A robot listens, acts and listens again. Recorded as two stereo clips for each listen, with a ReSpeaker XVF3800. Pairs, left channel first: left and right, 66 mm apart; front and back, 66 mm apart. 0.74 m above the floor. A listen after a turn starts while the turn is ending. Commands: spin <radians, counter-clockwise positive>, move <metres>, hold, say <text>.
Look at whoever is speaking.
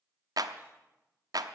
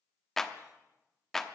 hold
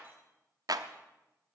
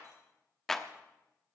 hold
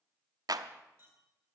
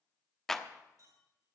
say I can't make out anyone speaking to turn to.